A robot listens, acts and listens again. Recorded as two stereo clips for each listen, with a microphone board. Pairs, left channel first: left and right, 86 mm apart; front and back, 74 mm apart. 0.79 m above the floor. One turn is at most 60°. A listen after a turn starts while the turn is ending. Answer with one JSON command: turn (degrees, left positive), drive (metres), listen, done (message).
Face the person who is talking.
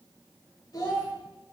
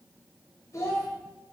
{"turn": 45}
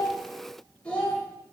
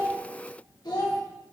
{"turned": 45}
{"turn": 15}
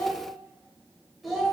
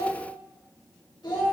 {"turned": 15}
{"done": "Facing the child speaking, 2 to 4 m away."}